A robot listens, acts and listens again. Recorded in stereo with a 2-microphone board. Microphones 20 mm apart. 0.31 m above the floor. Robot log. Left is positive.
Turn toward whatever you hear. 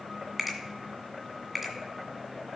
cmd yaw -30
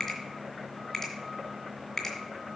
note: So it is at 20° left.
cmd yaw +20
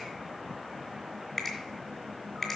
note: The finger snap is now 10° left.
cmd yaw +10
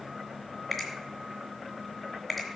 end: Found it: a finger snap, straight ahead.